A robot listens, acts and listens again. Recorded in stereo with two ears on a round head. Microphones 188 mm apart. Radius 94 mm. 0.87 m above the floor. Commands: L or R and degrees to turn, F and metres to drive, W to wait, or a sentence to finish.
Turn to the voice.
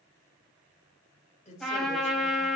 L35
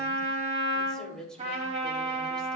Facing the woman speaking.